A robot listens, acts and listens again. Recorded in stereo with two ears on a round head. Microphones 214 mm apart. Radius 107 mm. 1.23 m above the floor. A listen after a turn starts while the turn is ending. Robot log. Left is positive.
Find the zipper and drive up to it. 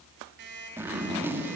cmd yaw -30
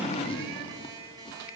note: So it is at 20° left.
cmd yaw +20
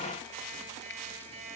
cmd idle
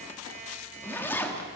note: The zipper is now 10° left.
cmd yaw +10
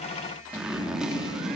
cmd fwd 1.0
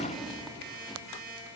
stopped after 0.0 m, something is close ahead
cmd idle
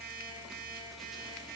cmd idle
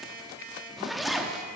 end: Blocked. The zipper is further on, straight ahead.